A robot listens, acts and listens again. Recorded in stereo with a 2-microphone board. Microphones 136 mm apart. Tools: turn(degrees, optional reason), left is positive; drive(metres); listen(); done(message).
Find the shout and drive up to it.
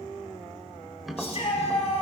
turn(degrees=50, reason="The shout: about 50° left or 130° left.")
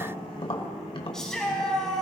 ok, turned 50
drive(metres=1.0)
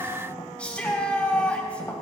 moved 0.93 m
turn(degrees=10, reason="The shout is now 10° left.")
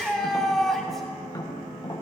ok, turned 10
drive(metres=1.0)
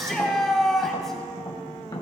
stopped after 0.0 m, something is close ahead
done("Something is in my way. I am facing the shout but have not reached it.")